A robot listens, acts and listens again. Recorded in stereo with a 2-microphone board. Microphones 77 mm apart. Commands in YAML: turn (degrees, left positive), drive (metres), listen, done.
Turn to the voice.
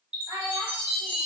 turn: -50
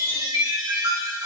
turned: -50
listen: true
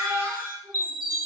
turn: -20
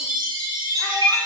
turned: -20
listen: true
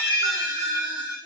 listen: true
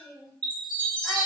done: "Found it: a child speaking, straight ahead."